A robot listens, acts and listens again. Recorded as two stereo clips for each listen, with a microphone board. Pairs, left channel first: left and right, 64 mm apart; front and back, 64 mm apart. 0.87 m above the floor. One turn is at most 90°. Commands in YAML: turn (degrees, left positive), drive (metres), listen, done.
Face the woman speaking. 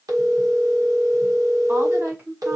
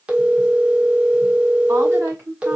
turn: -90
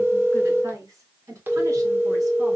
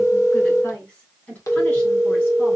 turn: -60
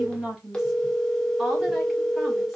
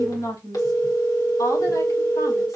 done: "Facing the woman speaking, over 4 m away."